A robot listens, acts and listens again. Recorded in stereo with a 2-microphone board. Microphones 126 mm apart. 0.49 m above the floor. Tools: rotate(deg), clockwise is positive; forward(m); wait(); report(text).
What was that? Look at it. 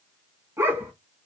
rotate(15)
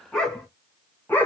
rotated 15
rotate(-20)
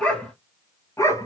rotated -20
rotate(-25)
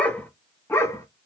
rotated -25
rotate(-25)
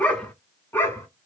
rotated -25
rotate(-20)
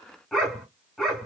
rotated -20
report("Found it: a dog barking, straight ahead, 1 to 2 m away.")